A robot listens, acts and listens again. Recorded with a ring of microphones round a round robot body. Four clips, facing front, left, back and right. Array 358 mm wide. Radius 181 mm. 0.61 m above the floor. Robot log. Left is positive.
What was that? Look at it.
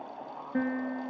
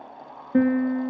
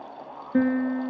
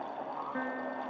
note: The piano: 115° left.
cmd yaw +115
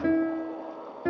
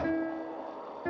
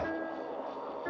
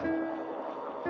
end: Found it: a piano, straight ahead.